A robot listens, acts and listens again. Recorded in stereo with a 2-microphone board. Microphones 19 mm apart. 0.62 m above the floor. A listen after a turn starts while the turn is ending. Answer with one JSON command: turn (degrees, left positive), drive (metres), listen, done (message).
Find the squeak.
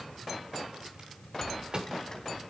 {"turn": 30}
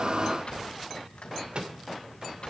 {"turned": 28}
{"turn": 125}
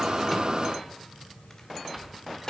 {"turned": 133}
{"done": "Facing the squeak, 2 to 4 m away."}